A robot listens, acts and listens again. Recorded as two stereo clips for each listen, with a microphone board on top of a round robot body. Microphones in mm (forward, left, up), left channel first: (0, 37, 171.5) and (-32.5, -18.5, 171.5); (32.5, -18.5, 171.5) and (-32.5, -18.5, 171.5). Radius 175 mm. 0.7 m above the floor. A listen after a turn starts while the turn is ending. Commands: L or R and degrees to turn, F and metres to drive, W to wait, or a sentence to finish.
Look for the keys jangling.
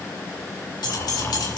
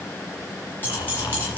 L65
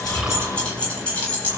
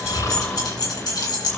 R10
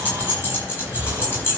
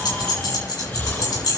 Found it: keys jangling, straight ahead, over 4 m away.